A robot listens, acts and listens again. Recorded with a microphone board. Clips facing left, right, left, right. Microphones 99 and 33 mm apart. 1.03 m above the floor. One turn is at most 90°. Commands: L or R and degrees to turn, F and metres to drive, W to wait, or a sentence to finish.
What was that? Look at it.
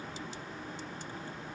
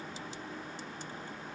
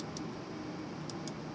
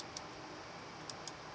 W
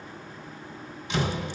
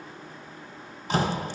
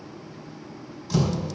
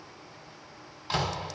R40
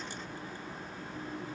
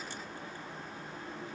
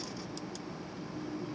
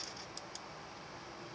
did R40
W
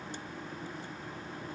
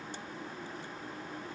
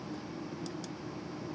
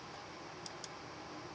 I heard a door slam, but can't make it out now. It was about straight ahead or 100° right.